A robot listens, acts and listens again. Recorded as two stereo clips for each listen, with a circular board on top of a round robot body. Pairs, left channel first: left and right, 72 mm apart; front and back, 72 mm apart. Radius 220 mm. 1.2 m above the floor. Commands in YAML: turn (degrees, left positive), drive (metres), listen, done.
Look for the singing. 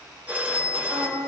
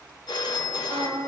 turn: -145
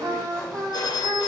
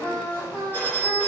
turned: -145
turn: -65
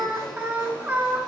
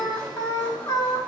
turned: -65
turn: -25
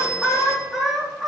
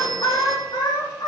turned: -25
done: "Found it: singing, straight ahead."